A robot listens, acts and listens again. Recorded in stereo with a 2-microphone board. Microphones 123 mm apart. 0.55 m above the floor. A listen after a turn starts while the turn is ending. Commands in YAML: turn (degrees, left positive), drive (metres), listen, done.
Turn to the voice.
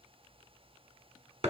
listen: true
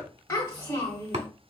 turn: 20
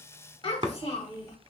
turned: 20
turn: 140
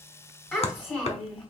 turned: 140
turn: 15
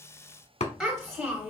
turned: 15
done: "Facing the child speaking."